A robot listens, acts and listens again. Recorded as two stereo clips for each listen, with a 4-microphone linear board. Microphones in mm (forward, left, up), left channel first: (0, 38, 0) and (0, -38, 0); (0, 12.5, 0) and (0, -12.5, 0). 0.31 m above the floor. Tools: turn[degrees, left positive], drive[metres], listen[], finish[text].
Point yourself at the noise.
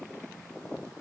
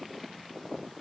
Action: listen[]
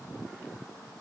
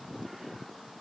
Action: listen[]
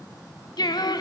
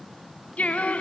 Thought: The singing: about 70° left or 110° left.
Action: turn[70]
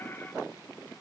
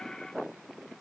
Action: listen[]
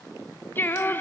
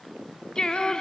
Thought: So it is at 30° left.
Action: turn[30]
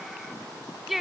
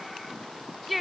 Action: finish[Facing the singing.]